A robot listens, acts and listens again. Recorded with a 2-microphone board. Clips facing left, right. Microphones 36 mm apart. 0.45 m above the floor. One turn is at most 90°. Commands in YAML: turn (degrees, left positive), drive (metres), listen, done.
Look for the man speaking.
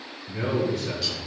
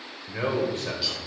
turn: -55
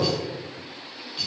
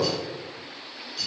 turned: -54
turn: -20
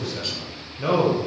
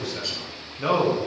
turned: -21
done: "Found it: a man speaking, straight ahead, 1 to 2 m away."